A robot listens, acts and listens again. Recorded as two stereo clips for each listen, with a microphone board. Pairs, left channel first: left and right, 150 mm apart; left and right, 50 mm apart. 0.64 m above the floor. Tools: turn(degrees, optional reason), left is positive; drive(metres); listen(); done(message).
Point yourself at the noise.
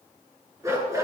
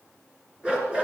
turn(degrees=-20, reason="The dog barking: about 20° right or 160° right.")
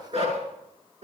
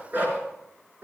turn(degrees=-135, reason="So it is at 135° right.")
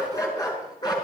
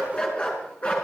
turn(degrees=30, reason="The dog barking is now 30° left.")
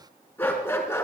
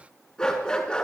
turn(degrees=15, reason="The dog barking is now 15° left.")
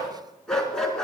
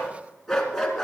done("Found it: a dog barking, straight ahead.")